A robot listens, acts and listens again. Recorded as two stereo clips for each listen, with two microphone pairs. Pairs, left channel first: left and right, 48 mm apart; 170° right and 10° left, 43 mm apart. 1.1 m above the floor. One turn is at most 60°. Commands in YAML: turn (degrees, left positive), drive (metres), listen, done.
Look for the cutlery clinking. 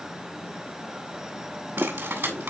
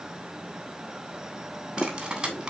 turn: -60
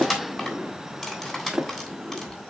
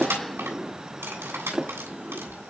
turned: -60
done: "Found it: cutlery clinking, straight ahead."